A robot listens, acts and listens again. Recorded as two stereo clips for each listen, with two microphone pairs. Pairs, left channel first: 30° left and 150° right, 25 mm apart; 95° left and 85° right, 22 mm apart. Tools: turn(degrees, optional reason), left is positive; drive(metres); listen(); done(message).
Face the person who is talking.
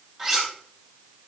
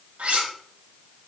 listen()
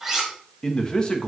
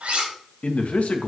turn(degrees=90, reason="The man speaking: 90° left.")
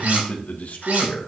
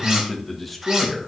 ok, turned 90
turn(degrees=10, reason="The man speaking is now 10° left.")
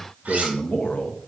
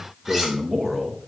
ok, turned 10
done("Found it: a man speaking, straight ahead.")